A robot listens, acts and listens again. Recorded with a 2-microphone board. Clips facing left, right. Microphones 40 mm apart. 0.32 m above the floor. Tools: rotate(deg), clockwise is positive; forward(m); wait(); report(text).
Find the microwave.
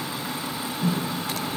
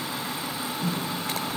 rotate(-30)
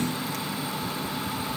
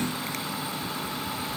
wait()
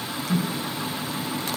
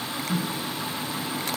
rotate(15)
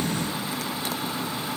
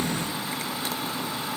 wait()
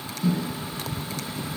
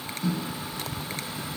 report("Found it: a microwave, straight ahead.")